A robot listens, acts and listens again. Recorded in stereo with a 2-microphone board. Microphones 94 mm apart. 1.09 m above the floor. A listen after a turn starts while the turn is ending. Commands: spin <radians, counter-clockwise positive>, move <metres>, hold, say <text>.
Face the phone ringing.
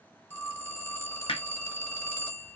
spin 0.52
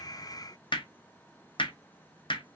hold
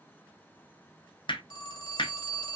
spin 2.18
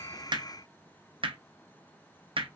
hold
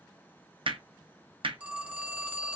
spin -0.26
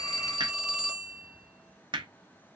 say Facing the phone ringing.